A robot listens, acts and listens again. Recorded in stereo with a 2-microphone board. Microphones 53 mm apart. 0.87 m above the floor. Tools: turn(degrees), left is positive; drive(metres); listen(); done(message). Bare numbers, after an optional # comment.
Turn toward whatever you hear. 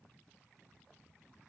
listen()
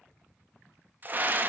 # The scream: about 35° right or 145° right.
turn(-35)
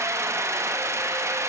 # So it is at 105° right.
turn(-105)
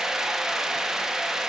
# The scream is now 10° right.
turn(-10)
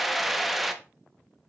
done("Found it: a scream, straight ahead, under 1 m away.")